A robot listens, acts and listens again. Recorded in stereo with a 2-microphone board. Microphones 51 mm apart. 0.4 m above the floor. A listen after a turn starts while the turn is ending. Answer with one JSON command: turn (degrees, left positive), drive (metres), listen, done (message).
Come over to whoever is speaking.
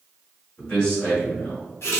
{"turn": 20}
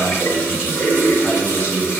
{"listen": true}
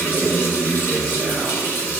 {"drive": 1.0}
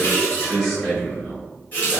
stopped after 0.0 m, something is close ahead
{"done": "Something is in my way. I am facing the man speaking but have not reached it."}